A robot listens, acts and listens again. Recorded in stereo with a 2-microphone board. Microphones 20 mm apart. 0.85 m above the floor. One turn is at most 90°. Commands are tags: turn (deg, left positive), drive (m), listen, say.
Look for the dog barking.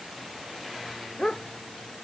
<turn deg="50"/>
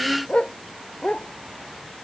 <turn deg="85"/>
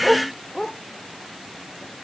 <turn deg="30"/>
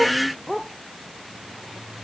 <say>Found it: a dog barking, straight ahead.</say>